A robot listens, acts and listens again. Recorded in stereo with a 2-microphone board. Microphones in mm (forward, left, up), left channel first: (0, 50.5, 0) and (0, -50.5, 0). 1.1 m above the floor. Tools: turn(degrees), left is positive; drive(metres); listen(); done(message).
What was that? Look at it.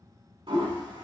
turn(degrees=-60)
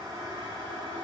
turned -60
turn(degrees=-60)
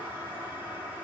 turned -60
turn(degrees=-25)
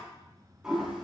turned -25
turn(degrees=-10)
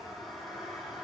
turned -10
done("Facing the toilet flushing, 2 to 4 m away.")